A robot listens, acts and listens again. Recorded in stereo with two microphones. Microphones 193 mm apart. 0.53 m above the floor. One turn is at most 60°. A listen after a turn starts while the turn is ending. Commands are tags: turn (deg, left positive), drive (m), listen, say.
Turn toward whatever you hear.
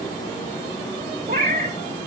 <turn deg="-50"/>
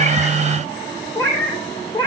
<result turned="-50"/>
<turn deg="25"/>
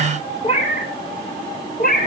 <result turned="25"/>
<turn deg="50"/>
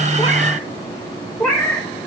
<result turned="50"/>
<say>Found it: a cat meowing, straight ahead, 1 to 2 m away.</say>